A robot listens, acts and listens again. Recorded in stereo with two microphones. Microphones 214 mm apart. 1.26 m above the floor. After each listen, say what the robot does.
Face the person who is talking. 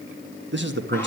Turn 60° right.
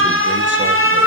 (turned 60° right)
Keep listening.
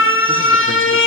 Keep listening.
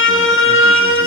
I heard a man speaking, but can't make it out now. It was about straight ahead or 60° right.